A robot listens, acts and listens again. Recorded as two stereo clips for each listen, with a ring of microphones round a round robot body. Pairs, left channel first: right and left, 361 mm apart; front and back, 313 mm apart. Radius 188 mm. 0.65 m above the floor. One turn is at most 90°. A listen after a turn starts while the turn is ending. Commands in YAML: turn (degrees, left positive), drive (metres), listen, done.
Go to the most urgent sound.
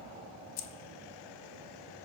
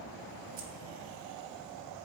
listen: true
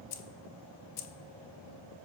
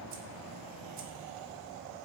listen: true
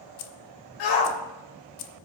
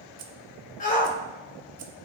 turn: -70
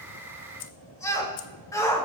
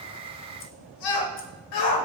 turn: -10
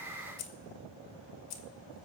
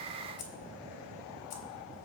listen: true
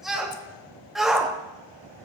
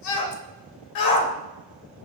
drive: 1.0
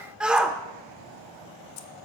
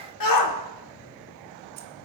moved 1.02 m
drive: 1.0
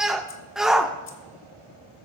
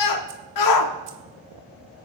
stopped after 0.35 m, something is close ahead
done: "I am next to the shout."